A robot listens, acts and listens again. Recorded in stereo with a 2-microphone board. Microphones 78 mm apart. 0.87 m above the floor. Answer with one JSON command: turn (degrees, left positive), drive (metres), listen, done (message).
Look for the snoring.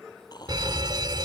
{"turn": 65}
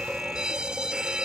{"listen": true}
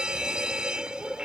{"listen": true}
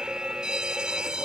{"done": "I heard snoring, but can't make it out now. It was about straight ahead or 50° left."}